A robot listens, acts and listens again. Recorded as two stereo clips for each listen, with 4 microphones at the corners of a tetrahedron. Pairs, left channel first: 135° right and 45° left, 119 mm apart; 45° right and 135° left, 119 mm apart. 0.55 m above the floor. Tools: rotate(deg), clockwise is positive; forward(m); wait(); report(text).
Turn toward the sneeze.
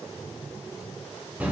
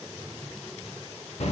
wait()
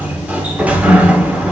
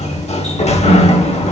wait()
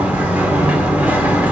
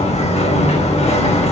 report("I can't make out a sneeze, only a sliding door.")